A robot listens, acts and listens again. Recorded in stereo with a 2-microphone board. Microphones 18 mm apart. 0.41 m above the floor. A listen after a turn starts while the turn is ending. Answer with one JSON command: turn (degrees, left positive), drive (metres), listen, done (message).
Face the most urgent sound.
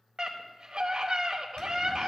{"turn": -50}
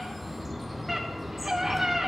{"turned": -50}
{"turn": -20}
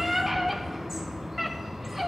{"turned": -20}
{"done": "Facing the scream."}